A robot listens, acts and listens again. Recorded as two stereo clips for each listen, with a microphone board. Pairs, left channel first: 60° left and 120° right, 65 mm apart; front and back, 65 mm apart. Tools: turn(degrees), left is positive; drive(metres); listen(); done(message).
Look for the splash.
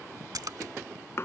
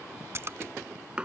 turn(degrees=-135)
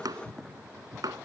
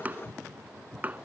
done("I heard a splash from this way, but can't make it out now.")